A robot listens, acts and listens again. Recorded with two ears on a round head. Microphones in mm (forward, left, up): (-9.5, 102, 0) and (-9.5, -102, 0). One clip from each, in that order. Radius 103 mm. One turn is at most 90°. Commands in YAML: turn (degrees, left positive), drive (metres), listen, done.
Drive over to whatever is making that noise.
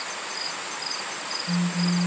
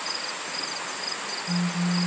turn: 65
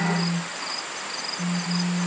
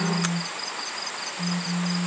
turn: 50
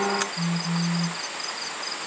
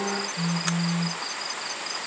drive: 1.0
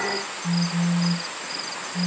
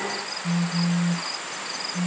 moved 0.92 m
drive: 1.0
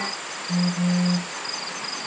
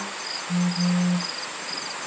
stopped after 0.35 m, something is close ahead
turn: 15
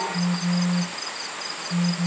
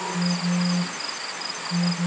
done: "Arrived at the phone buzzing, straight ahead."